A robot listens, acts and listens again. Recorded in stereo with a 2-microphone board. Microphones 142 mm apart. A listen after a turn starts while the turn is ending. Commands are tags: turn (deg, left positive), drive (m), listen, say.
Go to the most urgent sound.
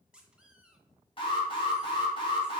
<turn deg="40"/>
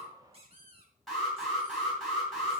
<drive m="1.0"/>
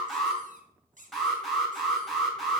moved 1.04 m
<drive m="1.0"/>
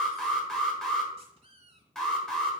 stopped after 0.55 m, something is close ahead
<say>I am next to the alarm.</say>